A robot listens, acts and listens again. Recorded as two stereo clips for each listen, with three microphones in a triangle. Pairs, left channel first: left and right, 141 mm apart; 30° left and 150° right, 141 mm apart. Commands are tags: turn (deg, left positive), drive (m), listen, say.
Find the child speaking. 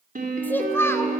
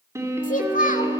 <turn deg="20"/>
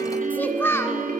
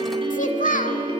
<turn deg="20"/>
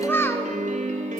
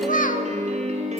<turn deg="20"/>
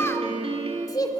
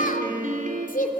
<turn deg="30"/>
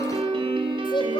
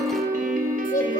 <turn deg="35"/>
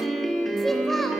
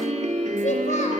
<listen/>
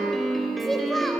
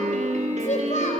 <say>Found it: a child speaking, straight ahead.</say>